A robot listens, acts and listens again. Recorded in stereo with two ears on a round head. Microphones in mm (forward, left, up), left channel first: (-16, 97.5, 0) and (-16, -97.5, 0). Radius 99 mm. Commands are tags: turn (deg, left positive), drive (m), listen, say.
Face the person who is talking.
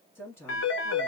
<turn deg="30"/>
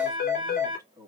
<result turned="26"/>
<turn deg="-15"/>
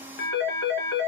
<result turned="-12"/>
<listen/>
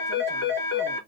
<listen/>
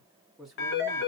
<say>Found it: a woman speaking, straight ahead.</say>